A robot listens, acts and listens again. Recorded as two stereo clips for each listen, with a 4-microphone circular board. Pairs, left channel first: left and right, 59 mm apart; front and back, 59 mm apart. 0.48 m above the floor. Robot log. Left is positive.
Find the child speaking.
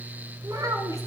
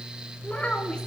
note: The child speaking: 70° right.
cmd yaw -70
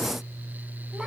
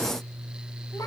cmd idle
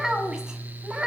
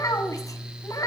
note: The child speaking is now 15° right.
cmd yaw -15
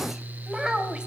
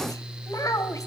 note: The child speaking is now 10° right.
cmd yaw -10
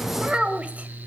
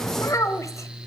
note: The child speaking is now 20° right.
cmd yaw -20
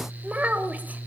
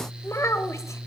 note: The child speaking is now 25° right.
cmd yaw -25
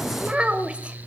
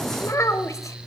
note: The child speaking is now 20° right.
cmd yaw -20
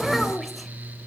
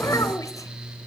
cmd idle
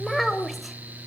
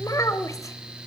end: Found it: a child speaking, straight ahead, 1 to 2 m away.